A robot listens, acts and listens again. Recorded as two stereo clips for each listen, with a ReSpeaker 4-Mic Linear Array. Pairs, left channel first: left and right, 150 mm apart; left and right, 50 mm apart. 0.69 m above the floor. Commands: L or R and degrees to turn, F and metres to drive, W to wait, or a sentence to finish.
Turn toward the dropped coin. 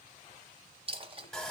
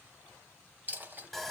R40
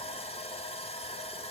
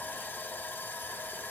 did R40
W
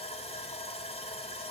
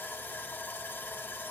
I heard a dropped coin, but can't make it out now. It was about straight ahead or 100° right.